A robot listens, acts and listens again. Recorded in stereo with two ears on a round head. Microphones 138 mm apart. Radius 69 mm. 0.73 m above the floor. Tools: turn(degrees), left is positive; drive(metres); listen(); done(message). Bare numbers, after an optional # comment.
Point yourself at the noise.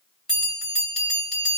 turn(30)
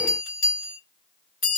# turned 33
# So it is at 145° left.
turn(145)
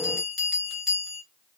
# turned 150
done("Found it: a bell, straight ahead, 1 to 2 m away.")